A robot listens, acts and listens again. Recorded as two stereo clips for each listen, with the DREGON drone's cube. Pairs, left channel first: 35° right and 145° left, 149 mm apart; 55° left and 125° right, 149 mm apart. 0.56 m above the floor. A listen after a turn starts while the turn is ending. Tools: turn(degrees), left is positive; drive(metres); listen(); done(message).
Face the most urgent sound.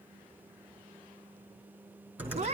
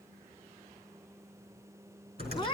listen()
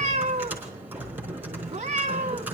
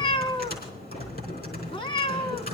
listen()
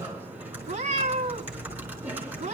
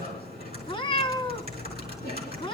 done("I can't make out anything urgent, only typing on a keyboard and a cat meowing.")